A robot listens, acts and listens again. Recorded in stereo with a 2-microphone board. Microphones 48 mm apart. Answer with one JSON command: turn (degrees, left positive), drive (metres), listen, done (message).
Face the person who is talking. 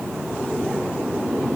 {"listen": true}
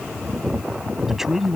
{"turn": -30}
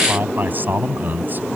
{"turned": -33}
{"turn": -140}
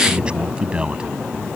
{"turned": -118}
{"turn": -20}
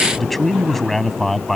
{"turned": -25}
{"done": "Found it: a man speaking, straight ahead."}